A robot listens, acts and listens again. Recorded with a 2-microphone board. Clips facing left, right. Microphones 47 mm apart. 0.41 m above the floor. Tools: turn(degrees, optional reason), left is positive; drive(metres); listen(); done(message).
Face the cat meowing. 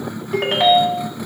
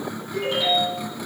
listen()
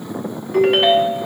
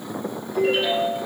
listen()
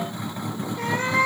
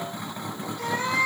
turn(degrees=35, reason="The cat meowing: about 35° left or 145° left.")
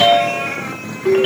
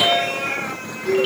listen()
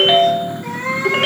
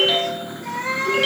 turn(degrees=15, reason="So it is at 15° left.")
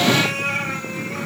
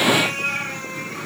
turn(degrees=10, reason="The cat meowing is now 10° left.")
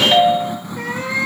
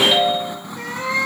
turn(degrees=10, reason="The cat meowing is now 10° left.")
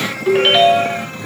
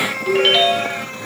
done("Facing the cat meowing, over 4 m away.")